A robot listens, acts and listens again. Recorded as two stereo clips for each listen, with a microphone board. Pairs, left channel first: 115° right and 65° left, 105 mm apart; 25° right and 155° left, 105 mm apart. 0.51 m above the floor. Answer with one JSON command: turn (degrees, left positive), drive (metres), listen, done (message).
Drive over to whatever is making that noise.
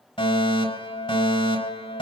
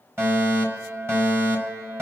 {"turn": -135}
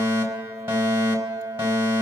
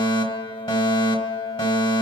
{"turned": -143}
{"drive": 1.0}
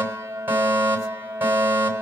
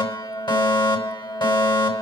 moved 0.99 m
{"drive": 1.0}
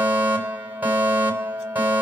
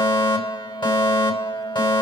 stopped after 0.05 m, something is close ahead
{"done": "Something is in my way. I am facing the fire alarm but have not reached it."}